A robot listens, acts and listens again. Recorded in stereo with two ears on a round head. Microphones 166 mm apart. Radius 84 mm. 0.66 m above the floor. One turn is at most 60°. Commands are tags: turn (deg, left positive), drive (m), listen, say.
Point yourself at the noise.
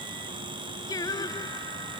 <turn deg="20"/>
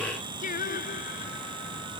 <turn deg="60"/>
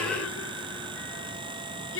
<turn deg="60"/>
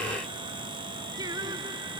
<turn deg="-20"/>
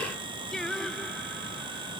<say>Facing the singing.</say>